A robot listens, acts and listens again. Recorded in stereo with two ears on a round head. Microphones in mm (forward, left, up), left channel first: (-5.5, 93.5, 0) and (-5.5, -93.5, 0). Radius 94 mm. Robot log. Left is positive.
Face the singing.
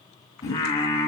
note: The singing: about 20° left or 160° left.
cmd yaw +20
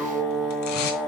cmd yaw +30
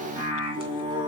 note: So it is at 25° right.
cmd yaw -25
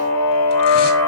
note: The singing is now 10° left.
cmd yaw +10
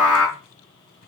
end: Found it: singing, straight ahead.